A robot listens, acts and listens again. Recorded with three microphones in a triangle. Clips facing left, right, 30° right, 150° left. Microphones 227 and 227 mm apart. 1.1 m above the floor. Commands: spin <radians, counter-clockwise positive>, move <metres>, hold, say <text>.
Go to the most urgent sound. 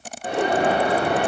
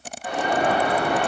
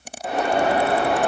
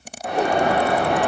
spin 0.96
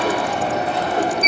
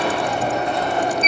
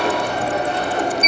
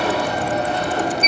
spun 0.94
move 1.0
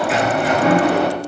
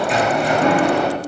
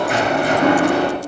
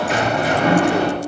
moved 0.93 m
move 1.0
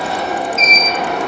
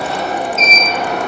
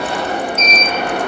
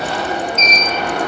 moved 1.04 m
move 1.0
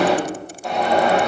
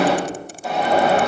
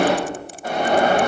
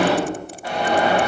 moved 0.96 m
move 1.0
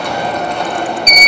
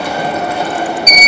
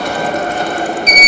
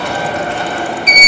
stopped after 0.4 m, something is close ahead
spin -0.17
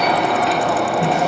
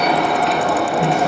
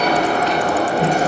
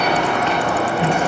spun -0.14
say Arrived at the alarm, straight ahead.